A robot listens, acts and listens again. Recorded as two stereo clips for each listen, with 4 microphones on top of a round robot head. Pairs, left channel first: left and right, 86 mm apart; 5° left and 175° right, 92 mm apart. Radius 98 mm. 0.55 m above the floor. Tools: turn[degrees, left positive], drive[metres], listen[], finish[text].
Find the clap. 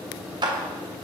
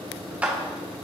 Thought: The clap: 105° right.
Action: turn[-105]
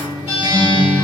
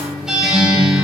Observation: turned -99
Action: listen[]
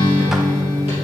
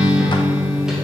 Action: listen[]
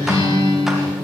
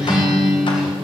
Action: finish[I heard a clap from this way, but can't make it out now.]